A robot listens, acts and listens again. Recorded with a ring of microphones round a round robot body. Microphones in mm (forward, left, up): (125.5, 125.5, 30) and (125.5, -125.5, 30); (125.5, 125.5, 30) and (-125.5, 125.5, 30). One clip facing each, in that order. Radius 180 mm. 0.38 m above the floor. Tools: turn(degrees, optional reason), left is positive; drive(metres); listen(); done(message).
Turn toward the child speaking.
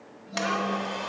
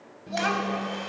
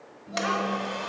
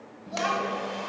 turn(degrees=-130, reason="The child speaking: 130° right.")
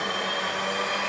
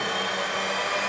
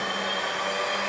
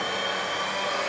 listen()
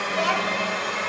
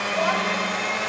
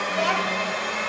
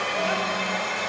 turn(degrees=35, reason="The child speaking is now 35° left.")
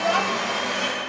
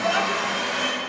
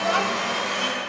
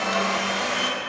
listen()
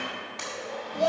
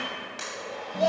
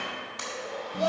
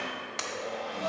done("Found it: a child speaking, straight ahead, 1 to 2 m away.")